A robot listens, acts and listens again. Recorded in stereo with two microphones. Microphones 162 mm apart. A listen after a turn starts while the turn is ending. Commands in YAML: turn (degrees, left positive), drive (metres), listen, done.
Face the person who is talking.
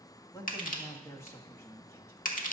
turn: 15
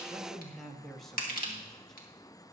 done: "Facing the man speaking, 1 to 2 m away."